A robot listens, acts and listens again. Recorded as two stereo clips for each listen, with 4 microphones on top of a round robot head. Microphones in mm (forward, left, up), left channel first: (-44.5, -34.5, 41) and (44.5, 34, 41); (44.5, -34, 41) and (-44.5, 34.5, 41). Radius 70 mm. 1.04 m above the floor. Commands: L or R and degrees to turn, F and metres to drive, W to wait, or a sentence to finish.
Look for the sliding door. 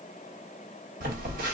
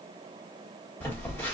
W
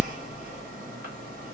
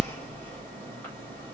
W
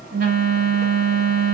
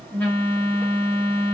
I can't make out a sliding door, only a phone buzzing.